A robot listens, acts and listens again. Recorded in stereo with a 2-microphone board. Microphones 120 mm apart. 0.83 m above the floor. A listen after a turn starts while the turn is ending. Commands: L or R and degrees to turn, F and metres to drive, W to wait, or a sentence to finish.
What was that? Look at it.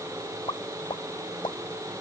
L40
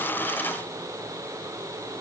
W
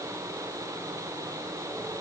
I heard a pop, but can't make it out now. It was about straight ahead or 100° left.